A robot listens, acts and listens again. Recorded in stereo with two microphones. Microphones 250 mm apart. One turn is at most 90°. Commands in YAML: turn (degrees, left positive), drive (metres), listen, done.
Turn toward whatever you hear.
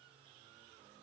listen: true
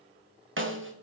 turn: -55
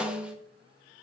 done: "Found it: a snare drum, straight ahead, 1 to 2 m away."